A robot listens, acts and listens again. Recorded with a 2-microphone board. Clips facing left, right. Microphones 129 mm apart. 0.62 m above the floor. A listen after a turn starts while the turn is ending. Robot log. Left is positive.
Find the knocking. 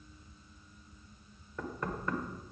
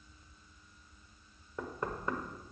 note: The knocking: about 20° right or 160° right.
cmd yaw -20
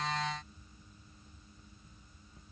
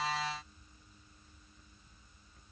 cmd idle
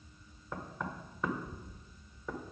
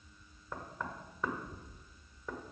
end: Found it: knocking, straight ahead, 1 to 2 m away.